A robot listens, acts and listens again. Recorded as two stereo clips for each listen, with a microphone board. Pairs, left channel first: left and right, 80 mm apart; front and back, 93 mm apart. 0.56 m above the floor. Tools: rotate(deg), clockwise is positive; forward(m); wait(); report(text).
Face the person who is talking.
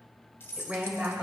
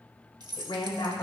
rotate(15)
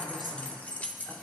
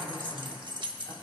report("Facing the woman speaking, 2 to 4 m away.")